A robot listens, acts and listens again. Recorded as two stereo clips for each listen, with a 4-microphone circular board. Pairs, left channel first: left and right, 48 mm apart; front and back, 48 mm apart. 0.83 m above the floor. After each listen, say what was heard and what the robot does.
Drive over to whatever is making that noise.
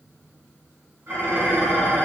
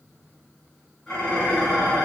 The dishes clattering: 75° right. Turn 75° right.
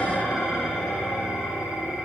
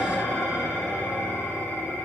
Drive 1.0 m forward.
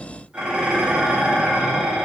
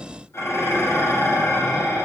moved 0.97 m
The dishes clattering is now 15° right. Turn 15° right.
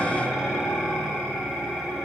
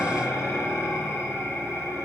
Drive 1.0 m forward.
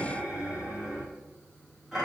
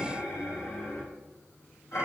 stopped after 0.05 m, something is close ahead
Arrived at the dishes clattering, straight ahead.